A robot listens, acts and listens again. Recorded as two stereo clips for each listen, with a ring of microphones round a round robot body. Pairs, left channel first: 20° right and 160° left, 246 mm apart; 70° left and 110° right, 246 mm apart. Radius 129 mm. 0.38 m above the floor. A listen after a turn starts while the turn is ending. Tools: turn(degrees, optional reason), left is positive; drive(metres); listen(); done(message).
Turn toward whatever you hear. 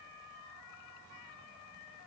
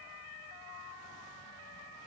listen()
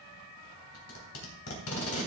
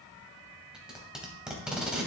turn(degrees=-25, reason="The tape being pulled: 25° right.")
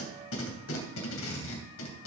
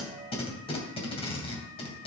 done("Facing the tape being pulled.")